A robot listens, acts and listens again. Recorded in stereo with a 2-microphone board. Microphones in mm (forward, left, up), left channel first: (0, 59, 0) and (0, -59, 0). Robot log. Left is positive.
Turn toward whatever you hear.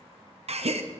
note: The gasp: about 60° right or 120° right.
cmd yaw -60
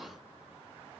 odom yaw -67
cmd idle
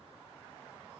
end: I heard a gasp, but can't make it out now. It was about 5° left or 55° right.